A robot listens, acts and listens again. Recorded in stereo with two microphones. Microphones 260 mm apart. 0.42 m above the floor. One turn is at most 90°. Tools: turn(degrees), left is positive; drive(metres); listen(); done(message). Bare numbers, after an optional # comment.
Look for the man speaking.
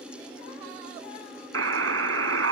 listen()
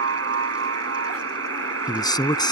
# The man speaking: about 15° left or 165° left.
turn(15)
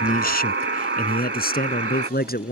# The man speaking: about 35° left or 145° left.
turn(35)
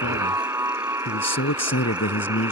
# So it is at 115° left.
turn(90)
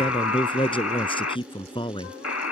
# The man speaking is now 20° left.
turn(20)
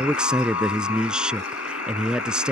done("Found it: a man speaking, straight ahead.")